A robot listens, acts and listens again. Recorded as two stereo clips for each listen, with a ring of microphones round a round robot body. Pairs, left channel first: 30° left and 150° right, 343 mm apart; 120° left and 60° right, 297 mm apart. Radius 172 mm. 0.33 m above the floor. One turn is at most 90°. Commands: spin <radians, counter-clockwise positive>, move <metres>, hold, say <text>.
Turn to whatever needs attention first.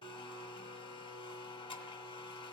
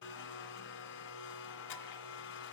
hold
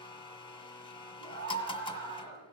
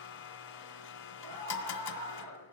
spin -1.57
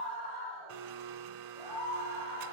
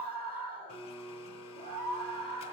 say Found it: a scream, straight ahead, over 4 m away.